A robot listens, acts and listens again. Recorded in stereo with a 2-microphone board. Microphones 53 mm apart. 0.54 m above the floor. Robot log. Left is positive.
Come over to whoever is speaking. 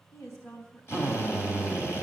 note: The woman speaking: about 70° left or 110° left.
cmd yaw +70
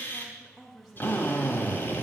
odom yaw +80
note: So it is at 10° right.
cmd yaw -10
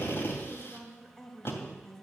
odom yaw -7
cmd fwd 1.0
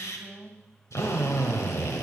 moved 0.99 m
cmd fwd 1.0
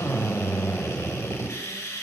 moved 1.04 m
cmd idle
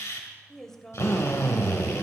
cmd fwd 1.0
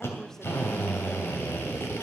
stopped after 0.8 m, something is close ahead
cmd idle
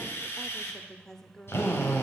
note: The woman speaking is now 10° left.
cmd yaw +10
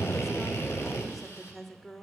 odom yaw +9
end: I am next to the woman speaking.